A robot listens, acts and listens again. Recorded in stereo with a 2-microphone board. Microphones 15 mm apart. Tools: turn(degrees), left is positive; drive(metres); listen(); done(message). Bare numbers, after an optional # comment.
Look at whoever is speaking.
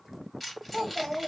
# The child speaking: about 45° right or 135° right.
turn(-45)
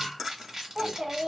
# So it is at 85° right.
turn(-85)
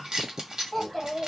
done("Found it: a child speaking, straight ahead, 1 to 2 m away.")